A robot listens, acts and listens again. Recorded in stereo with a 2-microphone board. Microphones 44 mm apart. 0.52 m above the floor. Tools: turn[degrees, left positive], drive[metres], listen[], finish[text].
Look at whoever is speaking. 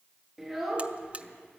Action: turn[30]
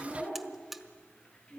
Thought: So it is at 150° left.
Action: turn[150]
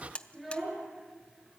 Action: finish[Facing the child speaking, over 4 m away.]